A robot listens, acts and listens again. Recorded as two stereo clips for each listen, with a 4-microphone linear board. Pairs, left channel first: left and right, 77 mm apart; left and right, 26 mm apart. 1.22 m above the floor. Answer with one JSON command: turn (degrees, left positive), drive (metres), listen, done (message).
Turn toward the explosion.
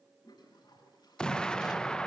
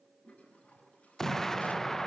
{"turn": 30}
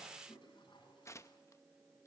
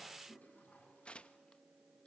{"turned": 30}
{"listen": true}
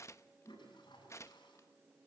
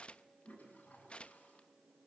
{"done": "I heard an explosion, but can't make it out now. It was about 20° right or 140° left."}